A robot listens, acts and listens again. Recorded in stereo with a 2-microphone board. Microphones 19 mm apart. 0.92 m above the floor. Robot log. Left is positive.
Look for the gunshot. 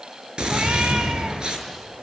note: The gunshot: about 55° right or 125° right.
cmd yaw -55
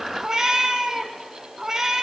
cmd idle
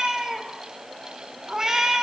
end: I heard a gunshot, but can't make it out now. It was about straight ahead or 70° right.